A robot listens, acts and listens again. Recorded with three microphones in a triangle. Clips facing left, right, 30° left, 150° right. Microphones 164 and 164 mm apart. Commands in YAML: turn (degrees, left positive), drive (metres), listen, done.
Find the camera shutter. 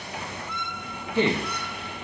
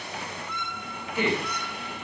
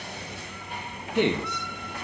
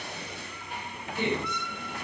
listen: true
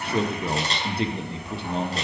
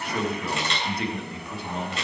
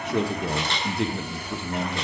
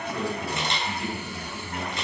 turn: 140
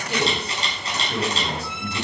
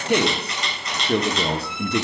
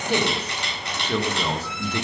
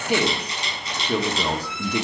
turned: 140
turn: 35
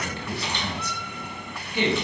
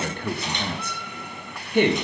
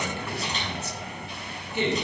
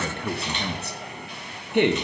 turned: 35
listen: true
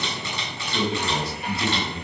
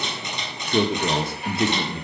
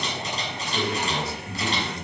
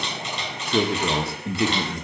turn: -20
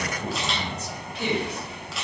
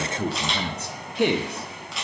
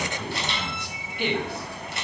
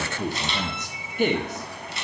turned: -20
done: "Facing the camera shutter."